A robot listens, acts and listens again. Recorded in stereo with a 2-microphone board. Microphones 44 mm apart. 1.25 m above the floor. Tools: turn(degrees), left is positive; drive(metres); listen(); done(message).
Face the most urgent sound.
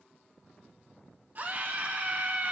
turn(degrees=-40)
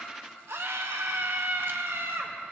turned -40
turn(degrees=-100)
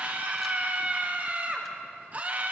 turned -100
turn(degrees=-40)
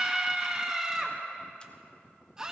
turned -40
turn(degrees=-15)
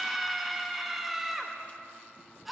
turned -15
done("Facing the scream, 1 to 2 m away.")